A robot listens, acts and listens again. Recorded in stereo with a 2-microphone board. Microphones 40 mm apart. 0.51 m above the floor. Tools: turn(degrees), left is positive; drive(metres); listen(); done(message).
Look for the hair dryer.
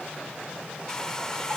turn(degrees=15)
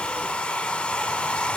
turn(degrees=155)
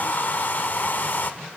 turn(degrees=55)
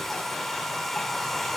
turn(degrees=10)
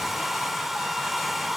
done("Found it: a hair dryer, straight ahead.")